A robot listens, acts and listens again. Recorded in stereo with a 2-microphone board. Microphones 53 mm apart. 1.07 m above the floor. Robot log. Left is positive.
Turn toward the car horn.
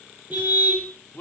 note: The car horn: about 35° right or 145° right.
cmd yaw -35
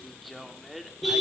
end: Facing the car horn, over 4 m away.